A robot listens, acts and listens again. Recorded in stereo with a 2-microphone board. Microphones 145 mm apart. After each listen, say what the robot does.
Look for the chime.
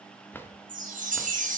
Turn 65° right.
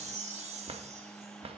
Turn 50° right.
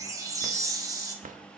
Turn 25° right.
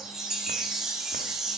Found it: a chime, straight ahead, 1 to 2 m away.